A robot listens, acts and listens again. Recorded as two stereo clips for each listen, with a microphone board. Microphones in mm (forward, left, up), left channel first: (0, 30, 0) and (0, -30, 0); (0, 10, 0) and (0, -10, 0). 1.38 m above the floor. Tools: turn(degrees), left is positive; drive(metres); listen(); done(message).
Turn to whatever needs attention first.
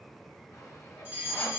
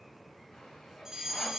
turn(degrees=-30)
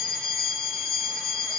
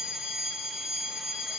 turn(degrees=-115)
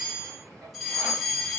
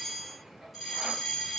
done("Found it: a fire alarm, straight ahead.")